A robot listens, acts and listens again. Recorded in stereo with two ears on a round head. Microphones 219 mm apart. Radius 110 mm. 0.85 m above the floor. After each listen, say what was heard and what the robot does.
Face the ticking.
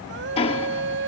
The ticking: about 25° left or 155° left. Turn 25° left.
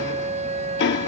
So it is at 130° left. Turn 130° left.
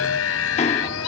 Keep listening.
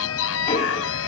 The ticking is now 30° left. Turn 30° left.
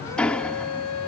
Facing the ticking.